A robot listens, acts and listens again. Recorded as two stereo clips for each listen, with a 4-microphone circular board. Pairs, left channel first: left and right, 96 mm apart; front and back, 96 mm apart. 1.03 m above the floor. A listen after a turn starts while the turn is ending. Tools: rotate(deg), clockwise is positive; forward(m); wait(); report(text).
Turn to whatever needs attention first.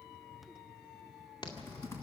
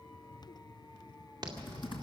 rotate(-135)
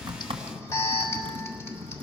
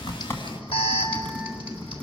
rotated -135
rotate(-30)
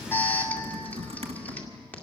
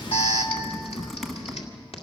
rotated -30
rotate(-15)
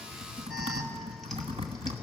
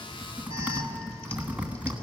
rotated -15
wait()
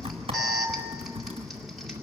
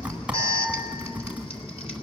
report("Found it: an alarm, straight ahead.")